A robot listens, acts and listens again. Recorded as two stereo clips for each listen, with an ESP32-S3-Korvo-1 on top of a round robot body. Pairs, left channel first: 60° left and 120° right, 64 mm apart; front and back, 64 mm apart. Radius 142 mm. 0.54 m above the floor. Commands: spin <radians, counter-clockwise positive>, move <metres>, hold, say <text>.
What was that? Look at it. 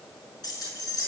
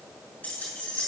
spin 1.22
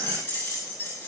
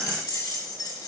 spin 0.17
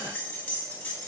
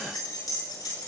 say Found it: keys jangling, straight ahead, over 4 m away.